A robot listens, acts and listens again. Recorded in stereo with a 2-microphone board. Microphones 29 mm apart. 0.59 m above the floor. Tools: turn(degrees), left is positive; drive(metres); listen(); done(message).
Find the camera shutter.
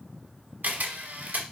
turn(degrees=-65)
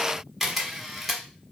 done("Found it: a camera shutter, straight ahead.")